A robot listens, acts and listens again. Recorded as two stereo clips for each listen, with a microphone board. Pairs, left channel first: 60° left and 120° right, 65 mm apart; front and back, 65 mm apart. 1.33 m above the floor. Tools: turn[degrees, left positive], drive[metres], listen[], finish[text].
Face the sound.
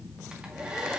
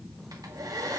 Thought: The hair dryer: 165° left.
Action: turn[165]
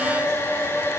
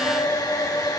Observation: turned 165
Thought: The hair dryer is now 15° left.
Action: turn[15]
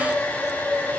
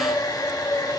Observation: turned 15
Action: finish[Facing the hair dryer, 1 to 2 m away.]